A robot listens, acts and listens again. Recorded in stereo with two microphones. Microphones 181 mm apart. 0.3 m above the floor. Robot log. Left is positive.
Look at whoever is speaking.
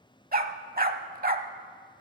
cmd idle
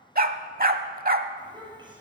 note: The child speaking: about 25° right or 155° right.
cmd yaw -25
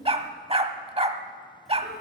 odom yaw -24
end: Facing the child speaking, over 4 m away.